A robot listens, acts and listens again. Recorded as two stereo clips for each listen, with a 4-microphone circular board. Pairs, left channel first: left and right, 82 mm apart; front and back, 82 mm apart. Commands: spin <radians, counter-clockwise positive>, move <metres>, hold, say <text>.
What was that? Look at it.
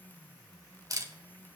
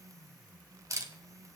spin -2.27
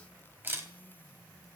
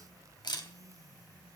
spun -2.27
spin -0.44
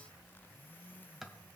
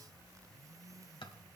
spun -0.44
say Found it: a camera shutter, straight ahead, 1 to 2 m away.